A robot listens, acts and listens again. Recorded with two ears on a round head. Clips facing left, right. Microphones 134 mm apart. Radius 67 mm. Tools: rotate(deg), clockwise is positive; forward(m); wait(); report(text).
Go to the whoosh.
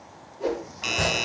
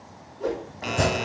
rotate(-30)
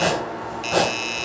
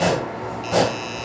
wait()
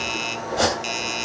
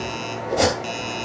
wait()
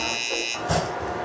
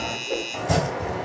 report("I heard a whoosh, but can't make it out now. It was about 20° right or 140° left. I did not reach it.")